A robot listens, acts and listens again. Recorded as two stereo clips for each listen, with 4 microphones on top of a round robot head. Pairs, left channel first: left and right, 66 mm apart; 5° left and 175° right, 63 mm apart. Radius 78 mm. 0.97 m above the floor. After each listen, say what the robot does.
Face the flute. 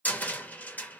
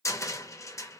Keep listening.
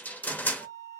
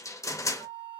Turn 105° left.
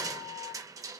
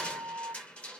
Turn 10° left.
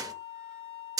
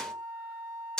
Found it: a flute, straight ahead, 2 to 4 m away.